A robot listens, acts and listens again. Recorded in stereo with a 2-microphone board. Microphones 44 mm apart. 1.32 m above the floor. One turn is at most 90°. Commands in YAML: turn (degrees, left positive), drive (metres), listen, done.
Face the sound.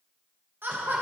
turn: -55
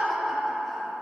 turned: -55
done: "Facing the laughter, 1 to 2 m away."